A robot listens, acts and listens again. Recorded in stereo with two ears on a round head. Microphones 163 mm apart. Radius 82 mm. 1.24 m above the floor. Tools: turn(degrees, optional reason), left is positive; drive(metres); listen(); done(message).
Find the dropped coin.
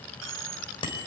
turn(degrees=-70, reason="The dropped coin: about 70° right or 110° right.")
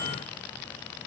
listen()
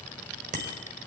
done("I heard a dropped coin, but can't make it out now. It was about straight ahead or 40° right.")